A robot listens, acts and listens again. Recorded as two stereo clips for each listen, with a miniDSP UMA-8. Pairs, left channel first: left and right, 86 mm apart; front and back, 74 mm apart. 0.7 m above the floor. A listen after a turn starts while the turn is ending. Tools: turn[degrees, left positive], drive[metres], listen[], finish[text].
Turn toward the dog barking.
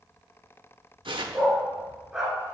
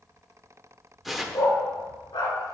Action: finish[Found it: a dog barking, straight ahead.]